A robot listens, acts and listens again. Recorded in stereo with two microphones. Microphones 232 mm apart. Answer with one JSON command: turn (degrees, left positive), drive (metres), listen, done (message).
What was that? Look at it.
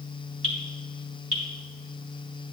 {"turn": -65}
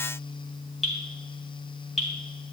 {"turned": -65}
{"done": "Found it: dripping, straight ahead, 2 to 4 m away."}